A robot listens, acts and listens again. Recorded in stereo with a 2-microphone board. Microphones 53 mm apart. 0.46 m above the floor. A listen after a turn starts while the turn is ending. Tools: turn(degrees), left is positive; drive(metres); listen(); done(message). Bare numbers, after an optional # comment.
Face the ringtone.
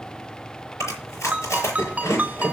# The ringtone: about 30° right or 150° right.
turn(-30)
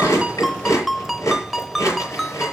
done("Found it: a ringtone, straight ahead.")